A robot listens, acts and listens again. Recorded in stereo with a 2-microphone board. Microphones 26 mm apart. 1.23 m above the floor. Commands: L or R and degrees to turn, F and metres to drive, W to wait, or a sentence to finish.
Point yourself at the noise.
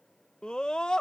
L35
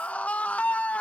L110
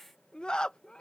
L35
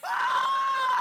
Facing the scream.